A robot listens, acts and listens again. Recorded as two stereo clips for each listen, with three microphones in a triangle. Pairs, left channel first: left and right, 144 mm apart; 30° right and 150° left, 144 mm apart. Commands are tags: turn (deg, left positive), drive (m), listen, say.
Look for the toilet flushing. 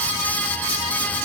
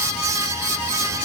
<listen/>
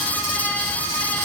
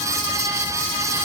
<listen/>
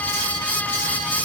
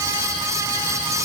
<say>I can't make out a toilet flushing to turn to.</say>